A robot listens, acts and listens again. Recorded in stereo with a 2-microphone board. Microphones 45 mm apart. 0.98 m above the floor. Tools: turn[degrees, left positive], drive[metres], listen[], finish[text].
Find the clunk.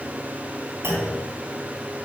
Thought: The clunk: about 70° right or 110° right.
Action: turn[-70]
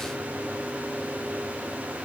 Action: listen[]
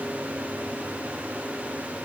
Action: finish[I heard a clunk, but can't make it out now. It was about straight ahead or 40° right.]